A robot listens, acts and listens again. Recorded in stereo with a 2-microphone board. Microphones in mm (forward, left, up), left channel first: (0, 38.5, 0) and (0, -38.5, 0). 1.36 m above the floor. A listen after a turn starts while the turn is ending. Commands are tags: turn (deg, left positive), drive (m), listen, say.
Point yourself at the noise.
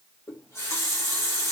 <turn deg="35"/>
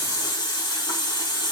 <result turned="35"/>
<turn deg="110"/>
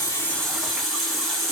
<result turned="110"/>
<say>Found it: a running tap, straight ahead.</say>